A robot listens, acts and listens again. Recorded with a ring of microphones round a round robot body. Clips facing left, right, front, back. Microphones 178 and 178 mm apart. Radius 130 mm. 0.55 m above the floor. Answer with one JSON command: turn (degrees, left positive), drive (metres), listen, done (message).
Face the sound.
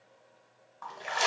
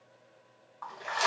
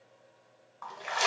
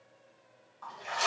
{"turn": 25}
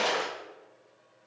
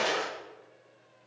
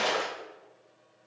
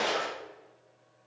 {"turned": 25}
{"done": "Found it: a splash, straight ahead."}